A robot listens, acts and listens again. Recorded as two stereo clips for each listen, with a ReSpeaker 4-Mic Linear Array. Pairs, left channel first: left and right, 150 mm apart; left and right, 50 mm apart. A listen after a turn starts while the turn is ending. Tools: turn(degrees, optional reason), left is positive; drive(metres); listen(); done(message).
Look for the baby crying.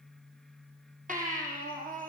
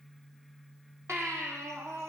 turn(degrees=-60, reason="The baby crying: about 60° right or 120° right.")
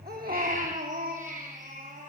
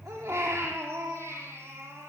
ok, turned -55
turn(degrees=-65, reason="So it is at 65° right.")
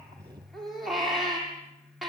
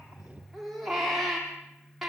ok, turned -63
done("Facing the baby crying, over 4 m away.")